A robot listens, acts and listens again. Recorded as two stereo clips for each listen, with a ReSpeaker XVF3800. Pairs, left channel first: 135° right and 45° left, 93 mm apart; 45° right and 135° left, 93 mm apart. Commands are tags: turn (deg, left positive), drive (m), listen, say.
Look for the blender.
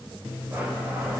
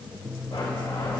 <turn deg="-25"/>
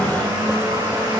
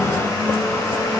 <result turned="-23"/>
<say>Facing the blender, 2 to 4 m away.</say>